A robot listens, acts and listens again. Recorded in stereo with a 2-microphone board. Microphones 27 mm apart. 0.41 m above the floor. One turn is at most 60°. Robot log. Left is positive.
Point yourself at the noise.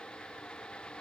cmd idle
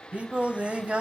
note: The singing: about 45° right or 135° right.
cmd yaw -45
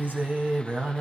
note: So it is at 70° right.
cmd yaw -60
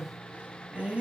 note: The singing is now 55° right.
cmd yaw -55
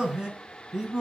note: The singing is now 30° right.
cmd yaw -30
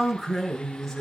end: Facing the singing.